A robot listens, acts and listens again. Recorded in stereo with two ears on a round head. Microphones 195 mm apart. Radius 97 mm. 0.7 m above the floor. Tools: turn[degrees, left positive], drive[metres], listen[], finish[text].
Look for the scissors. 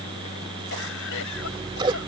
Thought: The scissors: about 20° right or 160° right.
Action: turn[-20]
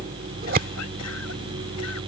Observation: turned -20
Thought: So it is at 135° right.
Action: turn[-135]
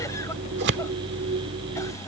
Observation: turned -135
Thought: The scissors is now 55° right.
Action: turn[-55]
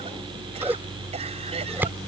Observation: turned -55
Thought: The scissors is now 10° right.
Action: turn[-10]
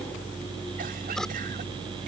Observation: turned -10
Action: finish[Facing the scissors.]